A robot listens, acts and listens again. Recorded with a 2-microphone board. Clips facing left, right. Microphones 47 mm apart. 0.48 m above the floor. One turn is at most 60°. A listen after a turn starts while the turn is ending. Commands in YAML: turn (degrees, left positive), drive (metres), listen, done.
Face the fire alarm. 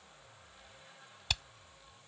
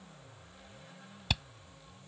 listen: true
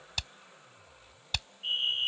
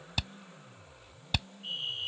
turn: 40
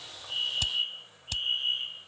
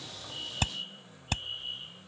turn: 60
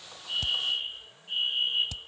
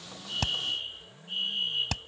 turn: 25
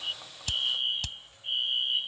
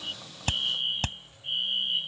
done: "Found it: a fire alarm, straight ahead."